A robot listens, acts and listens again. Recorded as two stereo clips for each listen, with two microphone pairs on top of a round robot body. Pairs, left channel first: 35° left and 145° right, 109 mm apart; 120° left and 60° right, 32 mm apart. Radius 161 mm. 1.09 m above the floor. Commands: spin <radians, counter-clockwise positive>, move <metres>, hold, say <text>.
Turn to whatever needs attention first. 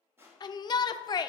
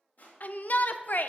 spin 1.57
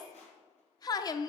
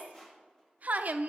spin -0.35
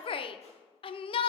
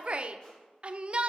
say Found it: a shout, straight ahead.